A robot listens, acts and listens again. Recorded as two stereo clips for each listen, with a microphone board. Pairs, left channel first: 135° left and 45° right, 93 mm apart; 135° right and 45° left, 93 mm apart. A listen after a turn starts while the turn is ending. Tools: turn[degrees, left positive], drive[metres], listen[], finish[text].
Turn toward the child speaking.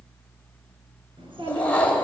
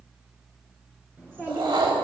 Thought: The child speaking: 25° right.
Action: turn[-25]
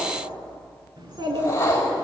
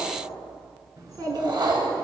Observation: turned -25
Action: finish[Facing the child speaking, over 4 m away.]